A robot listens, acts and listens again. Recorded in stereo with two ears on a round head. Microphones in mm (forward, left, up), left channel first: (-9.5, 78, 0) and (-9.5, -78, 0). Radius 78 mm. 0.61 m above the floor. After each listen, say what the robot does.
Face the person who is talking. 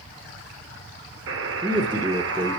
Turn 25° right.
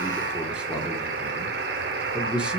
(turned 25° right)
Facing the man speaking.